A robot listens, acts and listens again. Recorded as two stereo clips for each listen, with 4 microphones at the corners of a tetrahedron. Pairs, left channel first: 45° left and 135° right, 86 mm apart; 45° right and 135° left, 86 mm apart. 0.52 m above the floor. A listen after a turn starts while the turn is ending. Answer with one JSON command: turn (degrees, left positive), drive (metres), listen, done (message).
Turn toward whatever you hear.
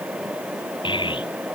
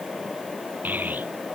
{"turn": 65}
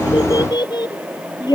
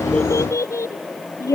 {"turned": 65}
{"turn": 10}
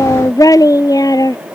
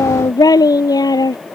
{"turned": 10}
{"done": "Facing the child speaking."}